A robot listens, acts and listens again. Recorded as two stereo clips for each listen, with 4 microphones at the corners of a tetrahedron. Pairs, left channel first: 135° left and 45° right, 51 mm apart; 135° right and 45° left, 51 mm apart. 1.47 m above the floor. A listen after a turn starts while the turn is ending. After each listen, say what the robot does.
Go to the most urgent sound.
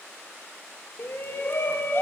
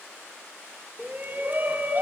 Turn 95° left.
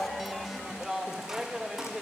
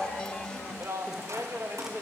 Turn 35° left.
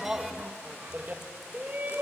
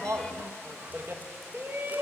Turn 10° left.
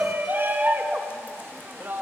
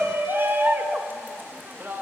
Drive 1.0 m forward.
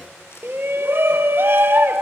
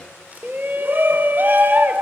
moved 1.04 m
Drive 1.0 m forward.
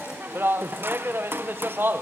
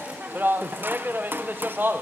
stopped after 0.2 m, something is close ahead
Arrived at the shout, straight ahead.